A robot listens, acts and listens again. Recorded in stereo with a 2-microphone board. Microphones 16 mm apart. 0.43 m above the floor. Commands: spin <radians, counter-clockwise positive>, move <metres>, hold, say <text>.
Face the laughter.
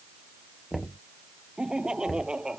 spin -1.57
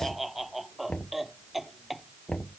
say Found it: laughter, straight ahead.